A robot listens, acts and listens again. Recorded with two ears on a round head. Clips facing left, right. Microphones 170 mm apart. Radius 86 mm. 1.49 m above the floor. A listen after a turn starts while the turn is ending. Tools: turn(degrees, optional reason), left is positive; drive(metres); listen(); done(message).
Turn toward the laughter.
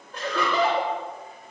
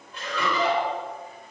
turn(degrees=35, reason="The laughter: about 35° left or 145° left.")
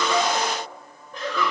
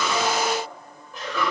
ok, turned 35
done("Facing the laughter.")